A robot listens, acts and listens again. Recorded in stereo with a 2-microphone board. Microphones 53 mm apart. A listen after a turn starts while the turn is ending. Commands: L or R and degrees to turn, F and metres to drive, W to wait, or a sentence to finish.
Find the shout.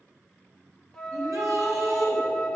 R75
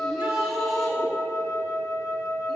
Facing the shout.